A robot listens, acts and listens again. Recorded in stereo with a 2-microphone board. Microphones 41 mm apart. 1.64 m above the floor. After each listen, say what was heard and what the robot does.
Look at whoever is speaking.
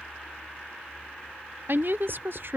The woman speaking: about 55° right or 125° right. Turn 55° right.
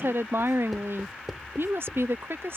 So it is at 70° right. Turn 70° right.
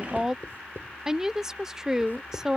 The woman speaking is now 15° right. Turn 15° right.
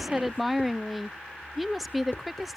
Facing the woman speaking.